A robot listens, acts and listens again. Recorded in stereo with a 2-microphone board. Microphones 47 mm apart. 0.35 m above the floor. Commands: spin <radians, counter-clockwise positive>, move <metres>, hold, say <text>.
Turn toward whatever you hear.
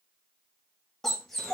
spin 0.52
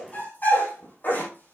spin 2.44
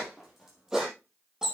spin -0.17
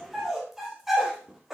say Found it: a dog barking, straight ahead.